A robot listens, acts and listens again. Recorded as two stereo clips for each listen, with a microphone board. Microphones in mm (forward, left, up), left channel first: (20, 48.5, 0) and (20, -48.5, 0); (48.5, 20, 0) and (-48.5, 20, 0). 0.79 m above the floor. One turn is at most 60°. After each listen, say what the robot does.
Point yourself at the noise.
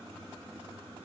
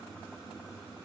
Keep listening.
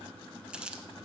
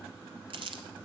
Turn 60° right.
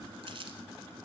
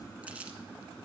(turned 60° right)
Turn 60° right.
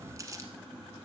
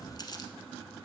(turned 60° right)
Turn 35° right.
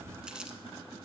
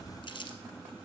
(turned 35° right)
Turn 10° right.
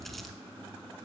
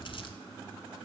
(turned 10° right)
Keep listening.
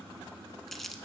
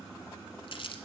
Found it: crumpling, straight ahead.